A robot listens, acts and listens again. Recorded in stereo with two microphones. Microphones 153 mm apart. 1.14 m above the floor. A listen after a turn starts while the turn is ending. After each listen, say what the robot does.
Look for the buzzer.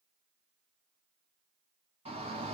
Keep listening.
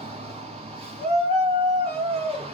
Keep listening.
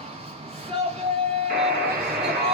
Turn 70° right.
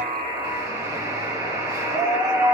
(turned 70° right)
Turn 25° right.
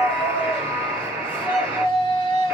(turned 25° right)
Turn 15° right.
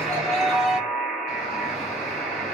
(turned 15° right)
Facing the buzzer.